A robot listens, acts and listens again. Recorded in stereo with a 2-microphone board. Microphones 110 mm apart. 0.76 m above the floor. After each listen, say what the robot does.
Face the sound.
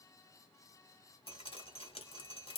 Turn 55° left.
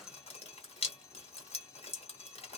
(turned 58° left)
Turn 65° left.
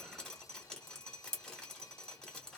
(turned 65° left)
Facing the dripping, 1 to 2 m away.